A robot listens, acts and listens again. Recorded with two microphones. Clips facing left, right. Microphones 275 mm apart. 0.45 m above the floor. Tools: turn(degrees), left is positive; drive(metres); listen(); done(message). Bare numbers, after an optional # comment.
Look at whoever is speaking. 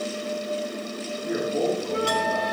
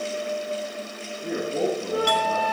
# The man speaking: about 60° right or 120° right.
turn(-60)
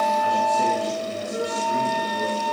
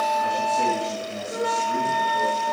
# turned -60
listen()
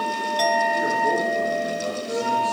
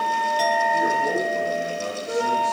listen()
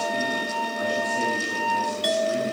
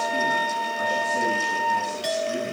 done("I heard a man speaking, but can't make it out now. It was about straight ahead or 60° right.")